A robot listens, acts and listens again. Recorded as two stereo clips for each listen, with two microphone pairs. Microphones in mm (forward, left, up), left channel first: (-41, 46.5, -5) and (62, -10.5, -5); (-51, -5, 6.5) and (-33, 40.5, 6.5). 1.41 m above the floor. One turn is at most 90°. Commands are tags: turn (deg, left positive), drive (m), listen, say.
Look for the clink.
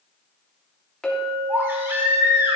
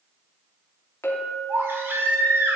<turn deg="-90"/>
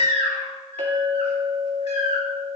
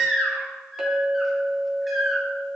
<turn deg="-10"/>
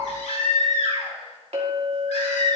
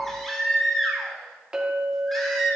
<say>Facing the clink, 2 to 4 m away.</say>